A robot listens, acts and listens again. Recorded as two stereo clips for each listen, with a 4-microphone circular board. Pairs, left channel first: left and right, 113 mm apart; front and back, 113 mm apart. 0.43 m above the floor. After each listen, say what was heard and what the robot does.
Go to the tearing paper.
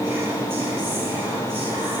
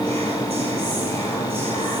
Keep listening.
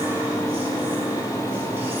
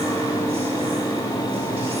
Keep listening.
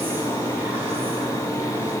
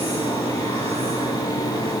I can't make out tearing paper.